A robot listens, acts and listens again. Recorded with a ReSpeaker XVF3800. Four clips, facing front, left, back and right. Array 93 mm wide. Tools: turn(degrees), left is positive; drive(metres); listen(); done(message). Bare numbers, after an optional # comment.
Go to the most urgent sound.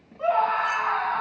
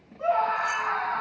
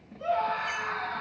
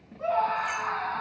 # The scream: 10° left.
turn(10)
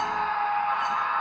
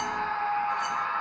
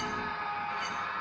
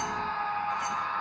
drive(1.0)
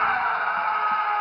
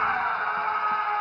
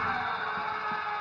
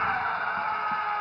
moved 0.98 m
# The scream is now 10° left.
turn(10)
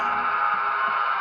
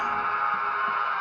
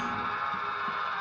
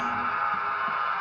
drive(1.0)
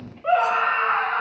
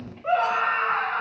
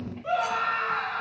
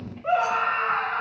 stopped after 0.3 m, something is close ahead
done("I am next to the scream.")